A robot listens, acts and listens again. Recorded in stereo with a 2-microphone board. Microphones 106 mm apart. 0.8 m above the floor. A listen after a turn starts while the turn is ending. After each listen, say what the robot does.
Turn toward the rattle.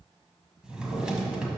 Keep listening.
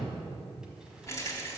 Turn 30° left.
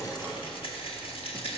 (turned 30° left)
Turn 120° left.
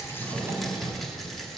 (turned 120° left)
Found it: a rattle, straight ahead.